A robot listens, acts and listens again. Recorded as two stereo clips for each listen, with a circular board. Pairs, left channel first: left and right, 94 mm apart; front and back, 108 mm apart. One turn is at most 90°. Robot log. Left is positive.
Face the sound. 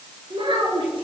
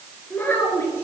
note: The child speaking: 70° right.
cmd yaw -70
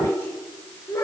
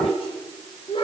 note: The child speaking is now 35° left.
cmd yaw +35
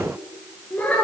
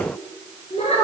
note: The child speaking is now 20° left.
cmd yaw +20
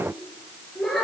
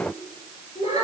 end: Facing the child speaking.